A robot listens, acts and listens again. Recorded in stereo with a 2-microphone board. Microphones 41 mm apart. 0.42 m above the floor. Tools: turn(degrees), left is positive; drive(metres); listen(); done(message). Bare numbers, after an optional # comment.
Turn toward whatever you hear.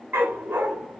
# The dog barking: about 65° right or 115° right.
turn(-65)
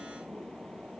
listen()
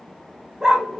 # So it is at 10° right.
turn(-10)
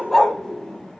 # The dog barking is now 15° left.
turn(15)
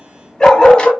# The dog barking is now 25° left.
turn(25)
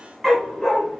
# The dog barking is now 10° left.
turn(10)
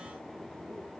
listen()
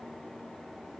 listen()
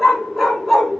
done("Facing the dog barking, 1 to 2 m away.")